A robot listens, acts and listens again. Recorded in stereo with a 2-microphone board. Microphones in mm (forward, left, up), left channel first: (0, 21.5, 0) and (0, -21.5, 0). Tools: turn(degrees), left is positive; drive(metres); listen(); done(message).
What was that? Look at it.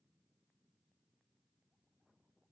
listen()
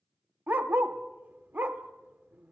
turn(degrees=-50)
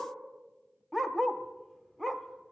done("Found it: a dog barking, straight ahead, under 1 m away.")